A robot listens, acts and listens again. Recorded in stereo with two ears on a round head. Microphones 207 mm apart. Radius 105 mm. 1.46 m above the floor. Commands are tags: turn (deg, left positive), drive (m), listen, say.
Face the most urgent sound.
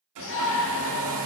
<turn deg="60"/>
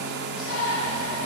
<turn deg="55"/>
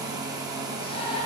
<turn deg="25"/>
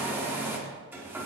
<listen/>
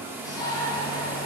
<turn deg="15"/>
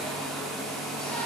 <listen/>
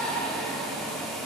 <say>Found it: a shout, straight ahead.</say>